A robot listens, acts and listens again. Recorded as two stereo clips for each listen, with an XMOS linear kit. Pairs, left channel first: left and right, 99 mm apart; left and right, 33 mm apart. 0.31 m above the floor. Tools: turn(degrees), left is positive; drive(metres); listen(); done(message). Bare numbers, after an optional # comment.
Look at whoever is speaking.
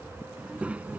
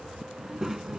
# The child speaking: about 15° right or 165° right.
turn(-15)
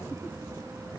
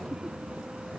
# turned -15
# The child speaking: about 40° right or 140° right.
turn(-40)
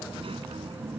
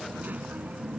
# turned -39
# So it is at 105° right.
turn(-105)
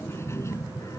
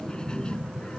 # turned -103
# The child speaking is now 35° left.
turn(35)
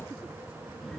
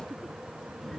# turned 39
listen()
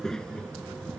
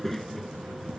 # The child speaking is now 10° left.
turn(10)
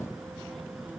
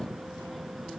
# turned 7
done("Found it: a child speaking, straight ahead.")